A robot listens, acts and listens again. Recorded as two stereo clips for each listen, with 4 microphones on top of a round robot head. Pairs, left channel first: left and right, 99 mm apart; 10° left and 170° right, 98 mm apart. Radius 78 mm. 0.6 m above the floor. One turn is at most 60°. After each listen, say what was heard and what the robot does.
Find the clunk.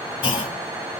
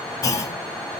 The clunk: 60° left. Turn 60° left.
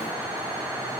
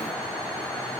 I heard a clunk from this way, but can't make it out now.